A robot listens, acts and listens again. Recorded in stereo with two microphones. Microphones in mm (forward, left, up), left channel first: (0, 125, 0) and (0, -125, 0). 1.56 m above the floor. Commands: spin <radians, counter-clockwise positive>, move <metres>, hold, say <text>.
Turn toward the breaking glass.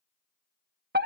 hold
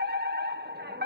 hold
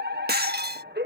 spin -0.70
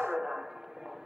hold
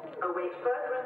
say I heard breaking glass, but can't make it out now. It was about straight ahead or 100° right.